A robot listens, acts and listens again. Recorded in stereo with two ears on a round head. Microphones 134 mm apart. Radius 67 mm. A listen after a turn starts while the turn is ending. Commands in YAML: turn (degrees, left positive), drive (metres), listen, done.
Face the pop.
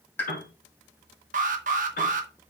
turn: 30
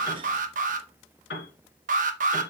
listen: true
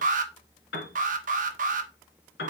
done: "I heard a pop, but can't make it out now. It was about 15° right or 135° left."